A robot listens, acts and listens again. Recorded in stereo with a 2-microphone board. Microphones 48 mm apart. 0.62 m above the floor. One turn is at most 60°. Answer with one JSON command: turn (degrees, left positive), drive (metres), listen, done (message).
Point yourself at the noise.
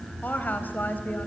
{"turn": 40}
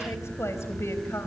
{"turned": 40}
{"turn": 60}
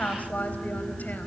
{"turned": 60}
{"turn": 35}
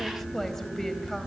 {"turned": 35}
{"turn": 10}
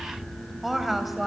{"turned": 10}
{"done": "Found it: a woman speaking, straight ahead."}